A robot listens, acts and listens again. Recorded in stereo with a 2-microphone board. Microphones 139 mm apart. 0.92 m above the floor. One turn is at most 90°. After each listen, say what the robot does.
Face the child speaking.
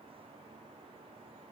Keep listening.
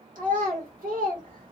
Turn 90° right.
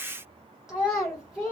Facing the child speaking.